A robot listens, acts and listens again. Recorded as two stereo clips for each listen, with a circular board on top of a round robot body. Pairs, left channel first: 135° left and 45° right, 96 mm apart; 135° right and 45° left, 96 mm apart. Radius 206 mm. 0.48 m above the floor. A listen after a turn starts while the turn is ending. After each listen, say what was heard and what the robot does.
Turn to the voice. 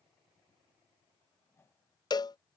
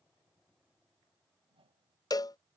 Keep listening.
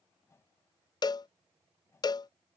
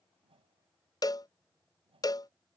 Keep listening.
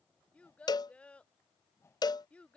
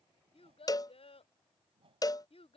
The child speaking: 150° right. Turn 150° right.
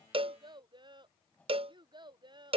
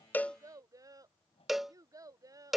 The child speaking is now 10° right. Turn 10° right.
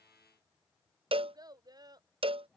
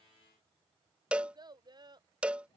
Found it: a child speaking, straight ahead.